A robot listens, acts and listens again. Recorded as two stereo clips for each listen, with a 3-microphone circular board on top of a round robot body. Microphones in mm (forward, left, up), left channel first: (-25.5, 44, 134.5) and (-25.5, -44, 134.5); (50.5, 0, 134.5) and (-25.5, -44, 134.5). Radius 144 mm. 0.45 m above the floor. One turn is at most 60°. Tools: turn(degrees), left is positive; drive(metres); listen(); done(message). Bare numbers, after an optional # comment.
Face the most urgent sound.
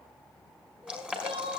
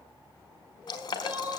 # The crying: 80° right.
turn(-60)
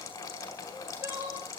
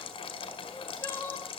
# The crying is now 30° right.
turn(-30)
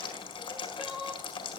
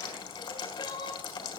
done("Facing the crying, 2 to 4 m away.")